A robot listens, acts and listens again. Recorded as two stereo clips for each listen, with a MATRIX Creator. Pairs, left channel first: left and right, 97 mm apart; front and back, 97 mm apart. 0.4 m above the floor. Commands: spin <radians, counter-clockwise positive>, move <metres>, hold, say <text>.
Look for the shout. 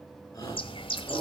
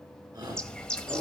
spin 2.44
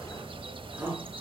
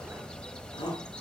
spin -0.35
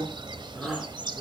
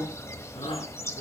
say Facing the shout, over 4 m away.